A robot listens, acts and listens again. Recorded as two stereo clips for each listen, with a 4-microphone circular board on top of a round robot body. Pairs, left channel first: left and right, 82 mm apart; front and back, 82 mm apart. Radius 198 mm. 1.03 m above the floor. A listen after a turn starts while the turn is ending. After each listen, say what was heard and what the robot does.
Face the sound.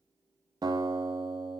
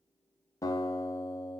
The guitar: 50° right. Turn 50° right.
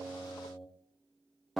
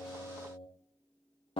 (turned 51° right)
Facing the guitar.